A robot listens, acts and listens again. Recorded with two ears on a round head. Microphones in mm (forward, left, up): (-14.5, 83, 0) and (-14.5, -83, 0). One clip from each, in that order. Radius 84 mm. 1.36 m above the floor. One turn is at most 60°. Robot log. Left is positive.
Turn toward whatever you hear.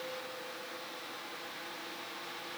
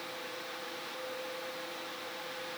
cmd idle
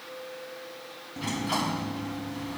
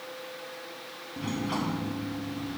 note: The sliding door: about 55° left or 125° left.
cmd yaw +55
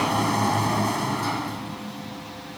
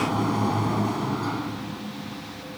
note: So it is at 55° left.
cmd yaw +55
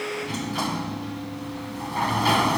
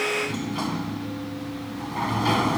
note: The sliding door is now 25° left.
cmd yaw +25
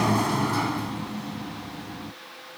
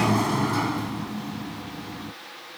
end: Found it: a sliding door, straight ahead.